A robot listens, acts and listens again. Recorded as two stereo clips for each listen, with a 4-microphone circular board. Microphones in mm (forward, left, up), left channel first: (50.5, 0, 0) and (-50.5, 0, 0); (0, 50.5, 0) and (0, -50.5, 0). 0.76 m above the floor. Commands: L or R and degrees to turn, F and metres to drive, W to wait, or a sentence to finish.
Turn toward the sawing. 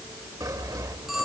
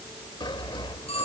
L125
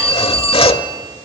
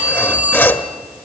L20
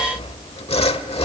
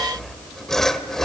Found it: sawing, straight ahead.